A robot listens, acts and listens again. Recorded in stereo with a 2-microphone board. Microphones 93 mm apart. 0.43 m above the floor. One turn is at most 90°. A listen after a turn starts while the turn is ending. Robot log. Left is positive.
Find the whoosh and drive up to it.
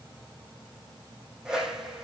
cmd yaw -30
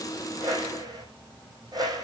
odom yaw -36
note: So it is at 135° right.
cmd yaw -90
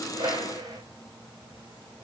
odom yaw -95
note: The whoosh is now 40° right.
cmd yaw -40
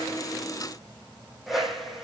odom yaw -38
cmd fwd 1.0
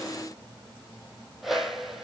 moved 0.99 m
cmd fwd 1.0
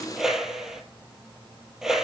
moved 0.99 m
cmd fwd 1.0
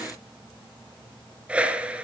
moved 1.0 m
note: The whoosh is now 15° right.
cmd yaw -15
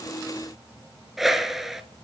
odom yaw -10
cmd fwd 1.0
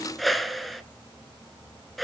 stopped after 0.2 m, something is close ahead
end: Arrived at the whoosh, straight ahead.